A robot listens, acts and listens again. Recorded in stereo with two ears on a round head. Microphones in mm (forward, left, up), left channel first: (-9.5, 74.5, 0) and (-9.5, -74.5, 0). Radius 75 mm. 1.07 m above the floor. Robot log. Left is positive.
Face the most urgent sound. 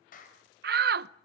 note: The shout: about 60° right or 120° right.
cmd yaw -60
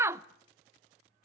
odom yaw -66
note: So it is at 15° right.
cmd yaw -15
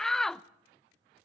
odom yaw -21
end: Found it: a shout, straight ahead.